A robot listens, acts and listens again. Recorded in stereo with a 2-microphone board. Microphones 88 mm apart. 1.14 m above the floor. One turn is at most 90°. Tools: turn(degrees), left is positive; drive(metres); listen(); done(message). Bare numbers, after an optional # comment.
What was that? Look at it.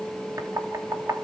# The knocking: about 40° right or 140° right.
turn(-40)
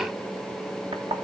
# So it is at 100° right.
turn(-90)
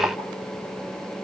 # Nothing new. It was at 10° right.
turn(-10)
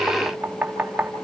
# The knocking is now 20° right.
turn(-20)
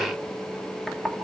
done("Found it: knocking, straight ahead, 2 to 4 m away.")